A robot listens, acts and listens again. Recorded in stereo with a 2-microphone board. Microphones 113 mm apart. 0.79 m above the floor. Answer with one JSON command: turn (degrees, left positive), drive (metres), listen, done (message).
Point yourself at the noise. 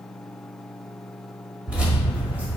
{"turn": -30}
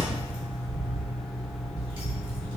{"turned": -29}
{"turn": -130}
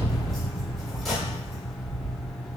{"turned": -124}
{"done": "Facing the keys jangling, over 4 m away."}